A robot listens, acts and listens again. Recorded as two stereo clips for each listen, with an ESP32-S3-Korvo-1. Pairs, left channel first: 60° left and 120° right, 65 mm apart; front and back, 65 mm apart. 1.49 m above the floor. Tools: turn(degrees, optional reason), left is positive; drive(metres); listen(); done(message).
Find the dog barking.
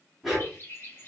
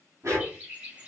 turn(degrees=150, reason="The dog barking: 150° left.")
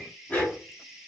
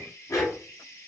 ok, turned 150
done("Facing the dog barking, 1 to 2 m away.")